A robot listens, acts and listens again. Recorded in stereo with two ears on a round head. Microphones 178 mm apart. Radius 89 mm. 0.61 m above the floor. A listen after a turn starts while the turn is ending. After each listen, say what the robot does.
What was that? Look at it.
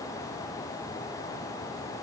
Keep listening.
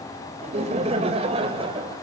Turn 25° right.
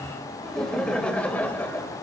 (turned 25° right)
Turn 10° left.
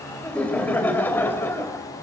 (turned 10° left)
Turn 10° left.
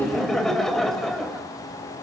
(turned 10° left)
Found it: laughter, straight ahead.